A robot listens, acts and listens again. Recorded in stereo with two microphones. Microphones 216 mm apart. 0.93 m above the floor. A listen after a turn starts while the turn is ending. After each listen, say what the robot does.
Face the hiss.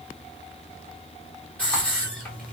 Turn 30° left.
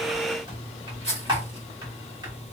Turn 145° left.
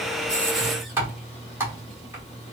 Keep listening.
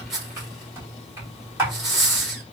Found it: a hiss, straight ahead, 1 to 2 m away.